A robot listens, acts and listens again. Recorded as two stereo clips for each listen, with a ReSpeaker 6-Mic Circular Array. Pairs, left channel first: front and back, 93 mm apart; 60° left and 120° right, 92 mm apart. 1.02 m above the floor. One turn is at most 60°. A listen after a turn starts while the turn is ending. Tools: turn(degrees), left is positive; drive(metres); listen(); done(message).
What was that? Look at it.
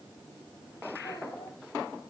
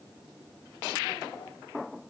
listen()
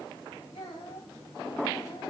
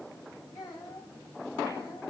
done("Facing the child speaking, over 4 m away.")